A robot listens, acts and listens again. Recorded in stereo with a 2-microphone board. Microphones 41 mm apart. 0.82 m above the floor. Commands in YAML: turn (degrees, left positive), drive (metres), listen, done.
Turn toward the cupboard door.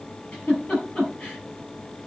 listen: true
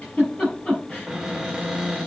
turn: 30
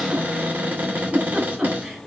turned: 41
turn: -40
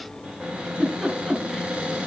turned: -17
turn: -25
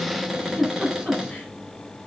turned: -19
done: "Facing the cupboard door."